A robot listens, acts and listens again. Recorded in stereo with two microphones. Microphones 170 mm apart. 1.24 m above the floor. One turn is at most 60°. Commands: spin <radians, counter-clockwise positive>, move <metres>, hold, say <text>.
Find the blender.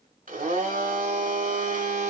spin -0.96
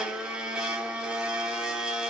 say Facing the blender, 2 to 4 m away.